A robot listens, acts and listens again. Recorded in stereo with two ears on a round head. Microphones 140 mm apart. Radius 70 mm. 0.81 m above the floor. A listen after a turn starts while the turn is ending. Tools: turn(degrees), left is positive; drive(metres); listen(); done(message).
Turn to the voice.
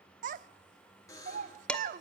turn(degrees=-50)
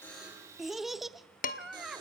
done("Found it: a child speaking, straight ahead.")